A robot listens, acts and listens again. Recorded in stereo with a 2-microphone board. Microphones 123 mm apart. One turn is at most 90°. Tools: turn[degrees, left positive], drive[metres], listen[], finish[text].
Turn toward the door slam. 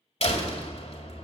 Thought: The door slam: about 55° left or 125° left.
Action: turn[55]
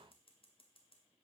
Action: listen[]
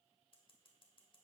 Action: finish[I heard a door slam, but can't make it out now. It was about straight ahead or 70° left.]